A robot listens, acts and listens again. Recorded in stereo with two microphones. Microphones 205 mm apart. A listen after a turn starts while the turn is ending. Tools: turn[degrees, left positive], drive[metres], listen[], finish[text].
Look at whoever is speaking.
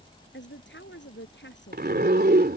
Thought: The woman speaking: about 65° left or 115° left.
Action: turn[65]
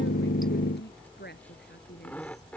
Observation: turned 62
Thought: So it is at 55° left.
Action: turn[55]
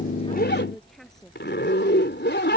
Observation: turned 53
Action: listen[]
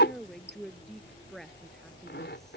Action: finish[Found it: a woman speaking, straight ahead.]